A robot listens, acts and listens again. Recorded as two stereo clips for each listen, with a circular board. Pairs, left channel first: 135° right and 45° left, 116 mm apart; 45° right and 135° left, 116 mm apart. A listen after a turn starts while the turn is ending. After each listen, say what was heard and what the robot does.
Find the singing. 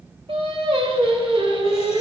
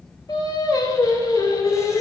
The singing: 15° left. Turn 15° left.
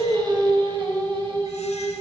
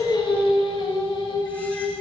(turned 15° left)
Facing the singing.